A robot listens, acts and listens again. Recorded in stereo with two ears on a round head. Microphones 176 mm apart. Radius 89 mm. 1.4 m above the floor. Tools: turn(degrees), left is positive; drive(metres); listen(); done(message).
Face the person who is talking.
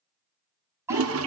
turn(degrees=-30)
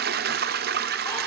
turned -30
listen()
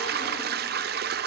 listen()
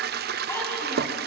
done("I heard a child speaking, but can't make it out now. It was about 15° left or 135° right.")